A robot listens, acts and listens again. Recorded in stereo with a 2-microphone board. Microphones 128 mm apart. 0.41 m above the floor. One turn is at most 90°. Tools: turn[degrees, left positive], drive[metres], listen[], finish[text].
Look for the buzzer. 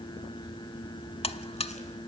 Action: listen[]
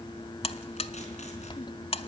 Thought: The buzzer: about 50° left or 130° left.
Action: turn[50]
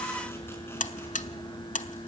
Thought: So it is at 80° left.
Action: turn[80]
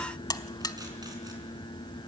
Thought: The buzzer is now 30° left.
Action: turn[30]
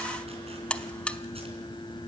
Thought: The buzzer is now 10° left.
Action: turn[10]
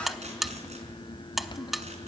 Action: finish[Found it: a buzzer, straight ahead.]